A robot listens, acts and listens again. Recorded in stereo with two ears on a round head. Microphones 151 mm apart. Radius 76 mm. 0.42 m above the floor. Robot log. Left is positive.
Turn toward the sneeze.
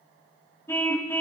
cmd idle
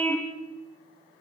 cmd idle
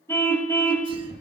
note: The sneeze: about 25° right or 155° right.
cmd yaw -25
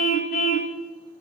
cmd idle
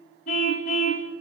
end: I heard a sneeze, but can't make it out now. It was about straight ahead or 130° right.